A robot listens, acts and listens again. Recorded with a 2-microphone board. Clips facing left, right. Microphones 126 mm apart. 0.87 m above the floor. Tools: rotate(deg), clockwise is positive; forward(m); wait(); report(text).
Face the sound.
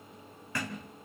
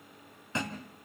rotate(25)
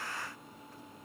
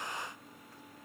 wait()
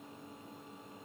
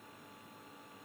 report("I heard a thud, but can't make it out now. It was about straight ahead or 130° right.")